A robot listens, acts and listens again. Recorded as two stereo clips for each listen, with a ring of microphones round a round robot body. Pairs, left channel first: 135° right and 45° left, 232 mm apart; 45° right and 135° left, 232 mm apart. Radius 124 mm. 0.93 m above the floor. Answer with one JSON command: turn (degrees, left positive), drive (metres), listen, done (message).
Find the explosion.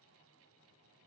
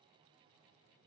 {"listen": true}
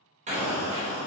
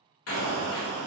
{"turn": -15}
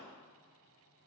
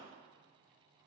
{"done": "Facing where the explosion came from. I can't hear it now."}